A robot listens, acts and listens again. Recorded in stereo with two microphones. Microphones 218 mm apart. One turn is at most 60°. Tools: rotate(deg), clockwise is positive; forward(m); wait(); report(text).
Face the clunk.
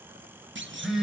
rotate(60)
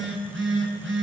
wait()
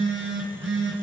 report("I heard a clunk, but can't make it out now. It was about straight ahead or 60° right.")